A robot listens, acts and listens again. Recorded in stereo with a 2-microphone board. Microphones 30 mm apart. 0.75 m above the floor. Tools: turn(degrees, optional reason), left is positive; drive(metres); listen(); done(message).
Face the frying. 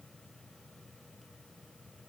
listen()
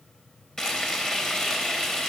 turn(degrees=20, reason="The frying: about 20° left or 160° left.")
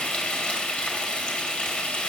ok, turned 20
turn(degrees=140, reason="So it is at 140° left.")
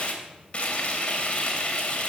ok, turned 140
turn(degrees=40, reason="The frying is now 40° left.")
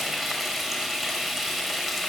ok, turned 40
done("Found it: frying, straight ahead, 2 to 4 m away.")